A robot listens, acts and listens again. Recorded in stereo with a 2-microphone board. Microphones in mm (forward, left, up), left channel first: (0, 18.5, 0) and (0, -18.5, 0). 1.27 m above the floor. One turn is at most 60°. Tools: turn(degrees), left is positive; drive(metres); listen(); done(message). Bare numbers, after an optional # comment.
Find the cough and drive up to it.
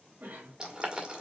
# The cough: about 55° right or 125° right.
turn(-55)
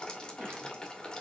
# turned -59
listen()
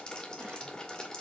listen()
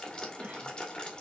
# So it is at 65° right.
turn(-60)
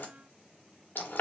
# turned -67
listen()
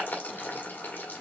listen()
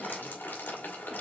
done("I heard a cough from this way, but can't make it out now. I did not reach it.")